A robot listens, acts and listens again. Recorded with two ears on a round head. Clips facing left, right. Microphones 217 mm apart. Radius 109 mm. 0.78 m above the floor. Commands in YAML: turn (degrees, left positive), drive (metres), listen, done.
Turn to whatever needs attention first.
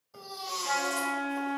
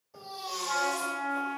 turn: 30
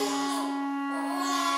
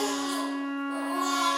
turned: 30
turn: -15
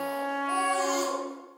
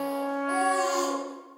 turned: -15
done: "Found it: a baby crying, straight ahead, 1 to 2 m away."